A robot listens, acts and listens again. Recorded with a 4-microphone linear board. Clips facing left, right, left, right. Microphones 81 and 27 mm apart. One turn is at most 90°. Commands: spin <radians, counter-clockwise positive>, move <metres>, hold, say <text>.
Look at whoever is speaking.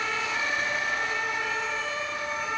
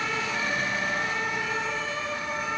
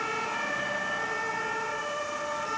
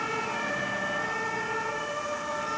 hold
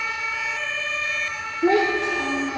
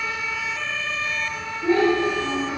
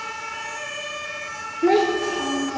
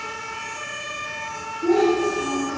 spin 1.57
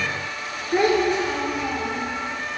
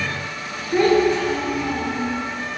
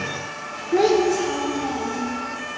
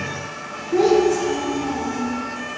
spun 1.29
spin 0.35
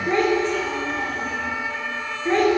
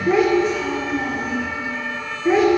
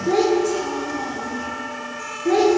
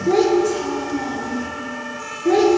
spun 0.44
say Facing the child speaking.